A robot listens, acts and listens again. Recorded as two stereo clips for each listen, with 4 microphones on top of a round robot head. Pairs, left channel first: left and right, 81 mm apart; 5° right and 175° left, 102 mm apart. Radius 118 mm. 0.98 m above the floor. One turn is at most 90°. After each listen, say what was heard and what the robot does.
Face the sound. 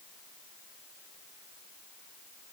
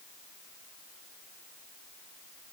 Keep listening.
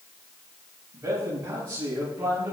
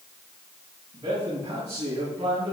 The man speaking: 150° right. Turn 90° right.
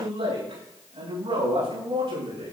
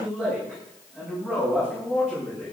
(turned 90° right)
The man speaking is now 105° right. Turn 90° right.
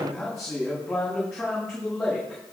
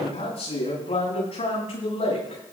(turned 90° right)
Found it: a man speaking, straight ahead.